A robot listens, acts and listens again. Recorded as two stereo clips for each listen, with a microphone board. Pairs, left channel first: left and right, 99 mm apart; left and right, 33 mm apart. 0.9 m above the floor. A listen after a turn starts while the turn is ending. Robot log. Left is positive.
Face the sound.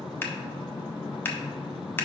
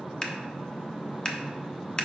note: The scissors: about 20° left or 160° left.
cmd yaw +20
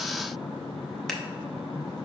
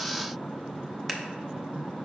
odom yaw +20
cmd idle
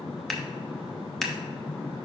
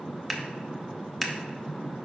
end: Found it: scissors, straight ahead, under 1 m away.